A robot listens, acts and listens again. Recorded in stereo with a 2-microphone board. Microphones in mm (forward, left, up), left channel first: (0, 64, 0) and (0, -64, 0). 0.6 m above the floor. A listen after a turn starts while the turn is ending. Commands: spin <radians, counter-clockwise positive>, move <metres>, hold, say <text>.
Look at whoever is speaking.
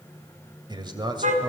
spin -0.61
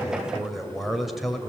say Facing the man speaking, 2 to 4 m away.